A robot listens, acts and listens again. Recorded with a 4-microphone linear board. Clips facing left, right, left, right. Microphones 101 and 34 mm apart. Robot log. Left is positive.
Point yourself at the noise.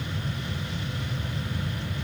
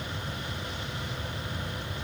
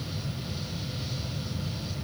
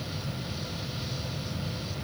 cmd idle
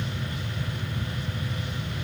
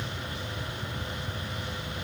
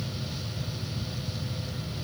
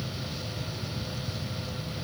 cmd idle
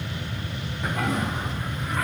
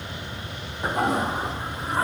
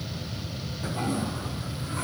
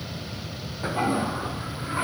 note: The toilet flushing: about 30° right or 150° right.
cmd yaw -30
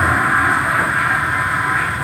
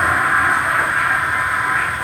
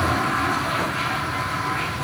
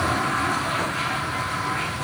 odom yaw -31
end: Facing the toilet flushing.